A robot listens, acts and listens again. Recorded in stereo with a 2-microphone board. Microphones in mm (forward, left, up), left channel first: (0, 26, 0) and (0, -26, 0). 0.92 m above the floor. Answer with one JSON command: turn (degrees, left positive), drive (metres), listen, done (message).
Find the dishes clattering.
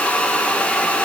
{"listen": true}
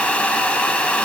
{"listen": true}
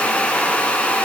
{"done": "I can't make out dishes clattering to turn to."}